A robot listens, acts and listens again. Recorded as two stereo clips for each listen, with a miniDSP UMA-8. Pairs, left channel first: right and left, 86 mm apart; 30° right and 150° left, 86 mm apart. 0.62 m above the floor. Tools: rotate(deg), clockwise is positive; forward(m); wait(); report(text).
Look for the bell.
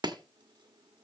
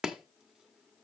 wait()
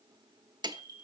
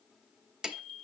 rotate(-130)
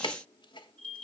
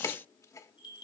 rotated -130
rotate(20)
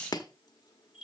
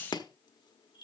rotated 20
report("Found it: a bell, straight ahead.")